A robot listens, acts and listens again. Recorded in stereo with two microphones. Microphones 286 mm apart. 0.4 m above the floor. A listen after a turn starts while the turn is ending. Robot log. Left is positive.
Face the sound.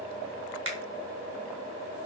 note: The finger snap: about 55° right or 125° right.
cmd yaw -55
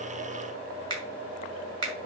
note: So it is at 70° right.
cmd yaw -70
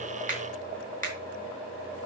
note: The finger snap is now 30° right.
cmd yaw -30
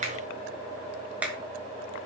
end: Found it: a finger snap, straight ahead, 2 to 4 m away.